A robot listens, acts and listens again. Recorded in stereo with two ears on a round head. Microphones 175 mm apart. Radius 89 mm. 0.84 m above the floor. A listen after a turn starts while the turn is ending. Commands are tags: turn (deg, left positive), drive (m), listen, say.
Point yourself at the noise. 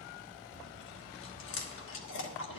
<turn deg="70"/>
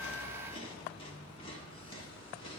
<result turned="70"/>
<turn deg="30"/>
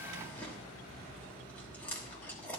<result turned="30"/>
<turn deg="10"/>
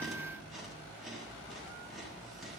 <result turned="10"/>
<say>Found it: chewing, straight ahead, 1 to 2 m away.</say>